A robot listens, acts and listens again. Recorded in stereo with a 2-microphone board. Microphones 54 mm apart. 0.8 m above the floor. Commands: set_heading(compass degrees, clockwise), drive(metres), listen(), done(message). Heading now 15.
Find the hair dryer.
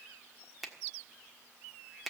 listen()
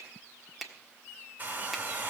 set_heading(55)
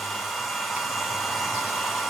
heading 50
done("Found it: a hair dryer, straight ahead.")